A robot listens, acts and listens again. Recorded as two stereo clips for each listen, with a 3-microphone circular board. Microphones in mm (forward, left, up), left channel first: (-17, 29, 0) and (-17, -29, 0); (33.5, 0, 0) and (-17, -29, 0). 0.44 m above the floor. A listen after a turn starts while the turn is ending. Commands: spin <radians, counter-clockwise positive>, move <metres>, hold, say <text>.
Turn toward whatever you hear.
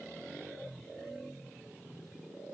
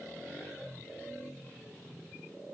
hold
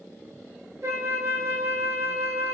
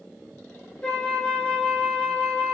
spin -0.70
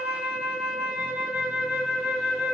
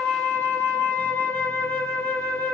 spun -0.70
spin -0.26
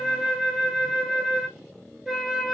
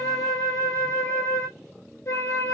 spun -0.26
say Facing the flute, under 1 m away.